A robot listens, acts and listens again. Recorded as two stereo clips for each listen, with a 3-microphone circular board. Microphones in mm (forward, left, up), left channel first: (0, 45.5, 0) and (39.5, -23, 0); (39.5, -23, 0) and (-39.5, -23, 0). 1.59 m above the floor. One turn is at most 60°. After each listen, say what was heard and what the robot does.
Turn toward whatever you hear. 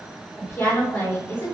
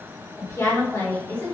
The woman speaking: 65° left. Turn 60° left.
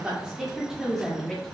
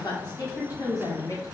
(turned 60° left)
The woman speaking is now 40° left. Turn 40° left.
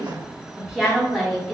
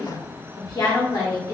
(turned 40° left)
The woman speaking is now 35° left. Turn 35° left.
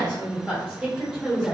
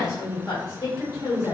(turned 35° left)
The woman speaking is now 20° left. Turn 20° left.
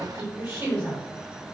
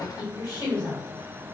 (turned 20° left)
Found it: a woman speaking, straight ahead, 1 to 2 m away.